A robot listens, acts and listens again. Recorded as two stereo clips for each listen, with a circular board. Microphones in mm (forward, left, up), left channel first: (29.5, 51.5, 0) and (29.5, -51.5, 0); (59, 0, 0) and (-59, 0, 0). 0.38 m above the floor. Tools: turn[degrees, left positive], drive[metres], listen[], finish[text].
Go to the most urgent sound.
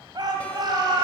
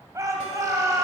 Thought: The shout: 125° right.
Action: turn[-125]
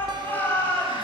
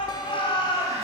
Thought: The shout is now 25° left.
Action: turn[25]
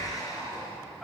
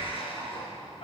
Action: drive[1.0]
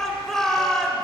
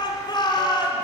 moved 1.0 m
Action: drive[1.0]
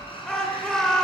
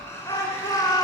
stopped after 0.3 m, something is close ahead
Thought: The shout is now 10° left.
Action: turn[10]
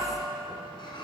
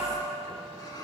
Action: listen[]
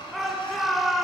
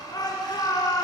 Action: finish[Arrived at the shout, straight ahead.]